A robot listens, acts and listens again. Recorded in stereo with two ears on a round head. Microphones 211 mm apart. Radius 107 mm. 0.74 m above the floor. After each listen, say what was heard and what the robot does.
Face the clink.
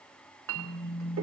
The clink: about 60° right or 120° right. Turn 60° right.
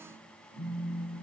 Keep listening.
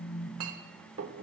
So it is at 60° right. Turn 60° right.
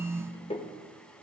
The clink is now 20° left. Turn 20° left.
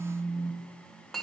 Facing the clink.